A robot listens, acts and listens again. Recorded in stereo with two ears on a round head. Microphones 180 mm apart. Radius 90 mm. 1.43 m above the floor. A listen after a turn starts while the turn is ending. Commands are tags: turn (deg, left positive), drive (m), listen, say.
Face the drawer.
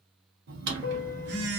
<turn deg="-60"/>
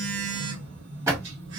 <turn deg="-20"/>
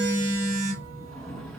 <say>Found it: a drawer, straight ahead.</say>